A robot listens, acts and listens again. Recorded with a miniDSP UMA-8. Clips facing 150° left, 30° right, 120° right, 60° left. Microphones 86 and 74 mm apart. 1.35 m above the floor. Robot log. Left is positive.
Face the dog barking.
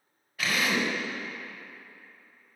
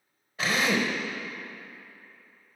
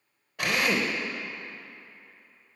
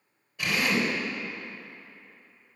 cmd idle
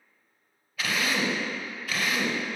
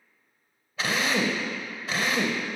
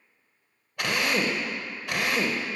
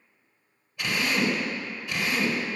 cmd idle
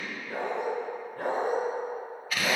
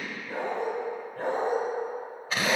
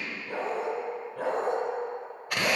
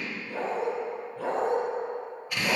note: The dog barking: 130° right.
cmd yaw -130
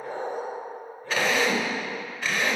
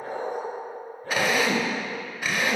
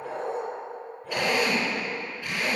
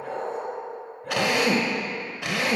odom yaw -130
note: The dog barking is now 15° left.
cmd yaw +15
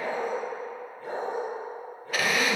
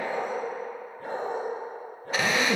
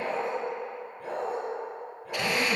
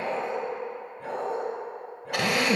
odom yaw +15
end: Facing the dog barking.